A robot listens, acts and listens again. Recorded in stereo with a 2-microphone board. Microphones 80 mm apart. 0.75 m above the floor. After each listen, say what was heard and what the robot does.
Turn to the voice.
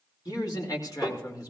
The man speaking: about 50° left or 130° left. Turn 50° left.
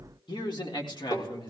So it is at 70° left. Turn 70° left.
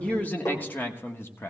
The man speaking is now 30° left. Turn 30° left.
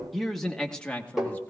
The man speaking is now 15° left. Turn 15° left.
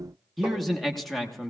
Found it: a man speaking, straight ahead, 1 to 2 m away.